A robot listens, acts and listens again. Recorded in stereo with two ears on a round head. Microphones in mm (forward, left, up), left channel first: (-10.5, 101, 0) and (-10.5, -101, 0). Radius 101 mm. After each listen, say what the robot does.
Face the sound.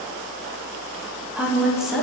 Turn 30° left.
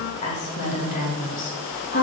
Turn 140° left.
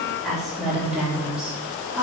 Facing the woman speaking.